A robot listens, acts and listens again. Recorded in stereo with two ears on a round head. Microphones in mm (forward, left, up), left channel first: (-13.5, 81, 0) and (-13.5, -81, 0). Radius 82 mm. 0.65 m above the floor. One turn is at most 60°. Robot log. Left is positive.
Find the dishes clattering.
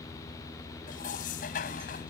note: The dishes clattering: about 50° left or 130° left.
cmd yaw +50
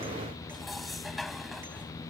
end: Facing the dishes clattering.